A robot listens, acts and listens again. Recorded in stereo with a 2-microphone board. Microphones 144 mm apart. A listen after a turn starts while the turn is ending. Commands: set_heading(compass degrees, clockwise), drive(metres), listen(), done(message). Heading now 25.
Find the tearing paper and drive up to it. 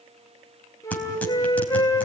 set_heading(355)
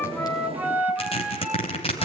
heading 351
set_heading(216)
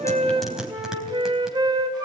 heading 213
drive(1.0)
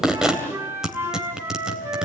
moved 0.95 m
drive(1.0)
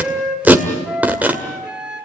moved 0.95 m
set_heading(228)
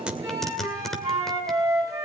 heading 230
drive(1.0)
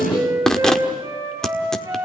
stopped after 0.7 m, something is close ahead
done("Arrived at the tearing paper, straight ahead.")